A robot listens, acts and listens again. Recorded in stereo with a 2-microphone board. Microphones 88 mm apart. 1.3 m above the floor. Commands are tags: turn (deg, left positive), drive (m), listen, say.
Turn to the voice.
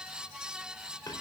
<listen/>
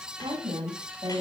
<turn deg="-55"/>
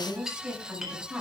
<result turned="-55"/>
<say>Found it: a woman speaking, straight ahead, over 4 m away.</say>